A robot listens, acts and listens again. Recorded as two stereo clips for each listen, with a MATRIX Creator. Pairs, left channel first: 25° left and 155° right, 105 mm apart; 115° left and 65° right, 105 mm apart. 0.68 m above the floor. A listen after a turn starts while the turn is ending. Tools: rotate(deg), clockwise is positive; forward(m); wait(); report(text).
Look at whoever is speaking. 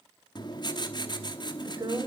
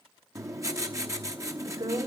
rotate(110)
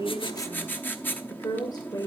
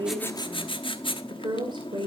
rotate(30)
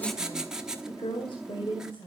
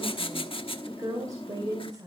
rotate(15)
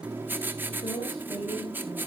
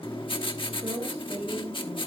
report("Facing the woman speaking.")